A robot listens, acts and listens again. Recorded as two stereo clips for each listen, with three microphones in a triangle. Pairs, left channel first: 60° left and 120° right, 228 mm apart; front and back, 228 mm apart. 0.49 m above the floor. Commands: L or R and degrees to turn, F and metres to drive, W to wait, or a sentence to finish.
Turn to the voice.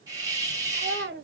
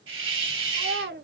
R150
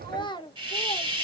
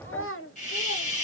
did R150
R10
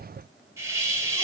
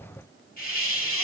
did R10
W
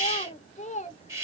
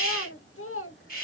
Facing the child speaking.